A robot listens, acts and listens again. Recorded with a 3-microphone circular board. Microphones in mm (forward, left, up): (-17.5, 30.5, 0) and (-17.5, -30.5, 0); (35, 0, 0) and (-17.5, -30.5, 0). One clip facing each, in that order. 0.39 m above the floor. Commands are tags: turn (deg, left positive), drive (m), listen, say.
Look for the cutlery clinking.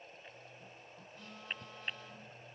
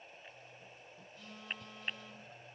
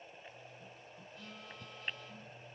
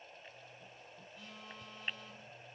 <listen/>
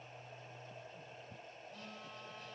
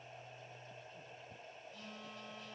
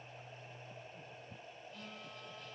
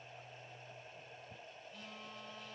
<listen/>
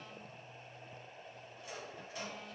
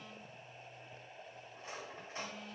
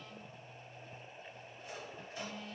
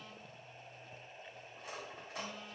<turn deg="-145"/>
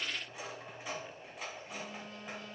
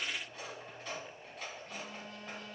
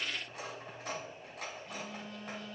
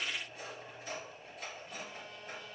<turn deg="10"/>
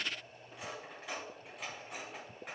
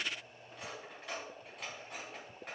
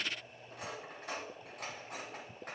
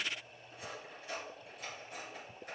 <say>Found it: cutlery clinking, straight ahead.</say>